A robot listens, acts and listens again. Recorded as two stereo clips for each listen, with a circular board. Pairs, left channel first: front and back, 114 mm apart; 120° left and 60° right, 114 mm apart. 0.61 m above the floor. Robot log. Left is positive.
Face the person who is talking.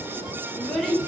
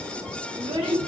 note: The child speaking: 90° right.
cmd yaw -90
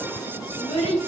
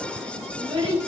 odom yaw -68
note: The child speaking is now 20° right.
cmd yaw -20
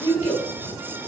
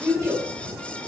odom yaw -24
end: Facing the child speaking, 1 to 2 m away.